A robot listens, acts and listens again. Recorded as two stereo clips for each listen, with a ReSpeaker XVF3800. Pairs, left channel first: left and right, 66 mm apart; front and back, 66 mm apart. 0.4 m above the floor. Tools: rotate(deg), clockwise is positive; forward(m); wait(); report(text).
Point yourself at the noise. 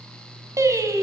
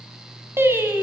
rotate(125)
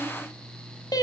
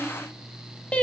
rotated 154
rotate(-75)
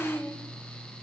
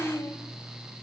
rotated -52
rotate(-35)
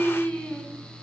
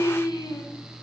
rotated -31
rotate(-15)
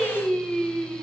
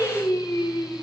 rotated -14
report("Found it: singing, straight ahead.")